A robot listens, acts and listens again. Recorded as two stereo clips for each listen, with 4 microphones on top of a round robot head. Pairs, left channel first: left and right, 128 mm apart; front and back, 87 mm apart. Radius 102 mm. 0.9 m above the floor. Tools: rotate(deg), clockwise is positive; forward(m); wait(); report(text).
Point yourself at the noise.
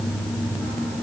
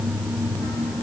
wait()
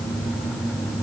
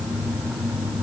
wait()
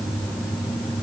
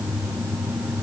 report("I can't make out anything to turn to.")